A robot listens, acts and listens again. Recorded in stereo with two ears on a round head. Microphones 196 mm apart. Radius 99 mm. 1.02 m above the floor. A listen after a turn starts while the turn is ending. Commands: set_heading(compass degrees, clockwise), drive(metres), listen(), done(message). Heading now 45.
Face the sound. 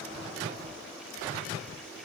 listen()
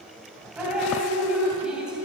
set_heading(75)
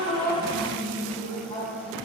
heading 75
set_heading(50)
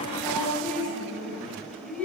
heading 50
done("Found it: dripping, straight ahead, 2 to 4 m away.")